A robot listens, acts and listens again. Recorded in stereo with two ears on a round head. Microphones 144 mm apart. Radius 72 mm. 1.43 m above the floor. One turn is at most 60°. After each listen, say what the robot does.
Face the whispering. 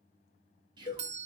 Turn 25° right.
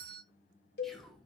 Found it: whispering, straight ahead, 2 to 4 m away.